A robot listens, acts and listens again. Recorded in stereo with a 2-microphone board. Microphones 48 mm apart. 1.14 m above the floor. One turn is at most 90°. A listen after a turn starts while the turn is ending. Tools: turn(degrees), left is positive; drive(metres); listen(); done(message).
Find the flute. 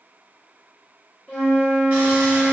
turn(degrees=20)
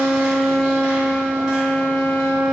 done("Facing the flute, 2 to 4 m away.")